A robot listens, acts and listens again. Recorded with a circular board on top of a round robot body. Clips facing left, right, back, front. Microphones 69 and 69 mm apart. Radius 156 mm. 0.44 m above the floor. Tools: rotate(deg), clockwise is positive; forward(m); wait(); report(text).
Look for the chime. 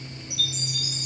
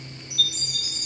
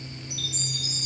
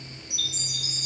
rotate(130)
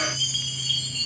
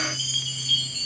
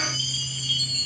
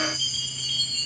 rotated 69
rotate(65)
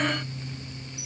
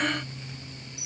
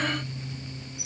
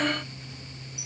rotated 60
report("Found it: a chime, straight ahead, 2 to 4 m away.")